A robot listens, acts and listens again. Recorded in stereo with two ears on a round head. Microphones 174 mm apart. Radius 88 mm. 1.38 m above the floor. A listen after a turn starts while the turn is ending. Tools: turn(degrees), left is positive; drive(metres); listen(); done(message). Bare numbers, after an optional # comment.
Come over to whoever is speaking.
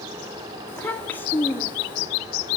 turn(30)
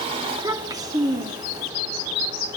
# So it is at 20° right.
turn(-20)
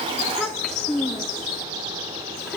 drive(1.0)
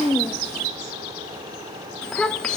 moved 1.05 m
drive(1.0)
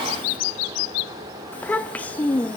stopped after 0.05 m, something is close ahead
# The child speaking is now 10° left.
turn(10)
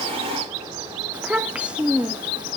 done("I am next to the child speaking.")